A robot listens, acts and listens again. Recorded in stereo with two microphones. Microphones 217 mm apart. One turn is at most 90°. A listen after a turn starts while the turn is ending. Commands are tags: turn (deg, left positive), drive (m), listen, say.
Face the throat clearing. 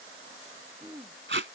<turn deg="-30"/>
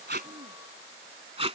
<listen/>
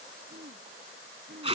<turn deg="-90"/>
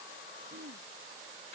<turn deg="-50"/>
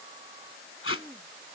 <say>Facing the throat clearing.</say>